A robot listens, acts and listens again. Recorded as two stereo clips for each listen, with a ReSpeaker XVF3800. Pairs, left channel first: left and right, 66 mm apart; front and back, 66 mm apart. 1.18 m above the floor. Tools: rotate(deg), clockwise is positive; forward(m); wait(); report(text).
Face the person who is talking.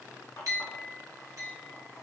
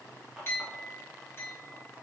wait()
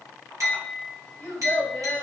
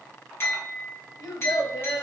rotate(-30)
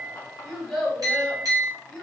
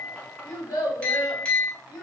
rotate(-10)
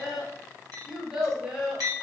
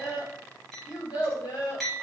report("Found it: a child speaking, straight ahead, 1 to 2 m away.")